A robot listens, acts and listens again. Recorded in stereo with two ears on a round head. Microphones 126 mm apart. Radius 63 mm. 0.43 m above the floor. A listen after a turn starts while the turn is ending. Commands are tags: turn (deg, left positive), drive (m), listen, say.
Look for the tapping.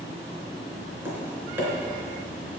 <turn deg="-30"/>
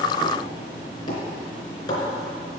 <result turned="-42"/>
<turn deg="30"/>
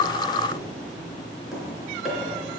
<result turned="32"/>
<say>Found it: tapping, straight ahead, 2 to 4 m away.</say>